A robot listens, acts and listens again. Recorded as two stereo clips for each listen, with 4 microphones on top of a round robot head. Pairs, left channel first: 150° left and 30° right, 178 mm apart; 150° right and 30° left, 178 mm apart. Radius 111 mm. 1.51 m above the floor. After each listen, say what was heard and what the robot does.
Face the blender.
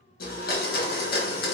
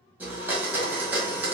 The blender: 110° left. Turn 110° left.
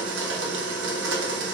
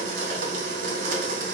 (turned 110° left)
The blender is now 10° right. Turn 10° right.
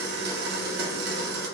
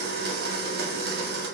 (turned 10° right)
Facing the blender, under 1 m away.